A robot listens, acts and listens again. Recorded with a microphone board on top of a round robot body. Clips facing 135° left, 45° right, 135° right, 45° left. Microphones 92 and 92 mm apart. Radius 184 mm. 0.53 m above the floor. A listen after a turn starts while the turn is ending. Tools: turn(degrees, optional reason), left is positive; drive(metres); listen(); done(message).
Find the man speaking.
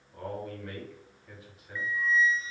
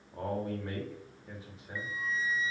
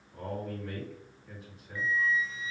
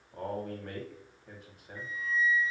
turn(degrees=15, reason="The man speaking: 15° left.")
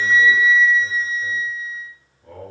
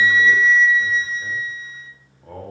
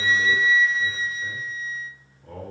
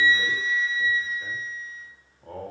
done("Facing the man speaking, 1 to 2 m away.")